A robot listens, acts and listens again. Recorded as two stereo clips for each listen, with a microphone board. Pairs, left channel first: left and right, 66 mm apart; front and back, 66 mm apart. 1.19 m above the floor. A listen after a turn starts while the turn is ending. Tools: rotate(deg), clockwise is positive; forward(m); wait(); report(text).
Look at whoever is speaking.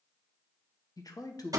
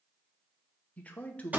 rotate(-70)
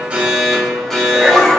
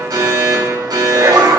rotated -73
wait()
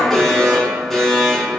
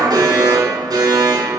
wait()
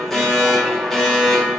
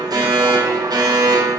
report("I heard a man speaking from this way, but can't make it out now.")